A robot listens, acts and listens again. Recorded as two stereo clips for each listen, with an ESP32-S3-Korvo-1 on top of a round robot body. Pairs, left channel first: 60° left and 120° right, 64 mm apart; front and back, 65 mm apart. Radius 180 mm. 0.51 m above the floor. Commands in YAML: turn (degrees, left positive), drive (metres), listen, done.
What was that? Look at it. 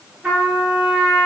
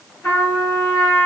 turn: -40
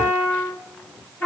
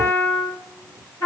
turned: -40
done: "Facing the trumpet."